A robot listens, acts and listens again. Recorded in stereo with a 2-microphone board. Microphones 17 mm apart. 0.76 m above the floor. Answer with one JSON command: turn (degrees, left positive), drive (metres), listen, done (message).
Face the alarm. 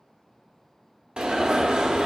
{"turn": -65}
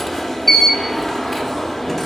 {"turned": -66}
{"done": "Found it: an alarm, straight ahead."}